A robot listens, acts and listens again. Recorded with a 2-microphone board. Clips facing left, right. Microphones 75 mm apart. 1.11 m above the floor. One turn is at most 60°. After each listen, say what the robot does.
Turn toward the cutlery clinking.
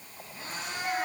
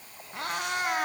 Keep listening.
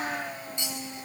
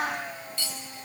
Turn 20° left.
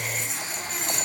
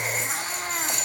Facing the cutlery clinking.